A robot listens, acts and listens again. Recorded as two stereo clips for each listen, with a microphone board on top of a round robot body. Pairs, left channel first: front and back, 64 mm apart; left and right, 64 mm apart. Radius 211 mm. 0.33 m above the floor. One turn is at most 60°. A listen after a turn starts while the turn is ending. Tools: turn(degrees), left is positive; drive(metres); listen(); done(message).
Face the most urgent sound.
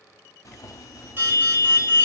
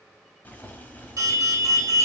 turn(degrees=-60)
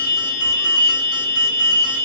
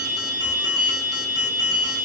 turn(degrees=-60)
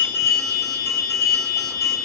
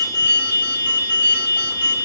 turn(degrees=-35)
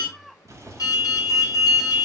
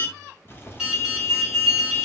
turn(degrees=-10)
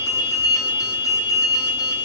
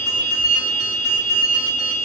done("Facing the alarm, 1 to 2 m away.")